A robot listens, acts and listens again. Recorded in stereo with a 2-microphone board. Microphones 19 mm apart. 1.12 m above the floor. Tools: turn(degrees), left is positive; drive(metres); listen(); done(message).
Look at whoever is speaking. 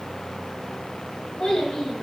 turn(degrees=90)
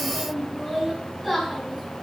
done("Found it: a child speaking, straight ahead.")